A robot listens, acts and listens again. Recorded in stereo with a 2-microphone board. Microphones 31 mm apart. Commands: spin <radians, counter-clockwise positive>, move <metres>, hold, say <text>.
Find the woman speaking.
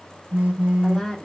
spin 0.52
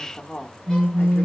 spin 2.53
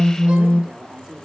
spin -0.26
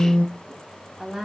say Found it: a woman speaking, straight ahead, under 1 m away.